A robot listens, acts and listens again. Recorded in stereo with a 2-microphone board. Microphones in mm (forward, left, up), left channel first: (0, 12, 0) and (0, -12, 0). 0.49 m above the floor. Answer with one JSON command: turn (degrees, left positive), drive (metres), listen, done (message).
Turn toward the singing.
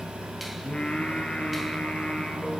{"turn": 50}
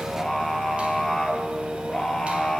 {"turn": 20}
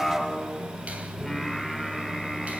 {"done": "Facing the singing."}